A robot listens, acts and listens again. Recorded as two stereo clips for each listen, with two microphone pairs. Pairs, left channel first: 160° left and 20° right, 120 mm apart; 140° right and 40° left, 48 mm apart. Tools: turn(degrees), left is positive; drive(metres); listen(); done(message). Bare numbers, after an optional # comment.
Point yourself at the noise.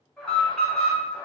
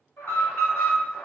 # The alarm: 115° right.
turn(-115)
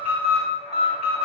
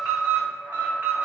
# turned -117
done("Found it: an alarm, straight ahead, 1 to 2 m away.")